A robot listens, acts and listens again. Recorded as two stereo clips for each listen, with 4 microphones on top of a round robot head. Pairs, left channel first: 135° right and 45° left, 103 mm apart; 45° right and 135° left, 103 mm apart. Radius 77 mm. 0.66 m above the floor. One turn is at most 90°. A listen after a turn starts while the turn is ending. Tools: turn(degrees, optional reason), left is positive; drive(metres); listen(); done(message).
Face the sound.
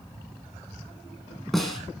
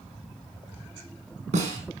turn(degrees=90, reason="The snare drum: 135° left.")
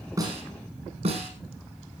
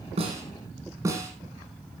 turn(degrees=70, reason="The snare drum is now 70° left.")
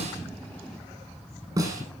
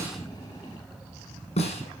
turn(degrees=-15, reason="The snare drum is now 15° right.")
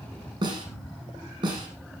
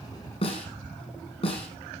turn(degrees=-10, reason="The snare drum is now 10° right.")
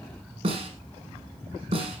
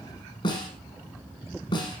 done("Found it: a snare drum, straight ahead.")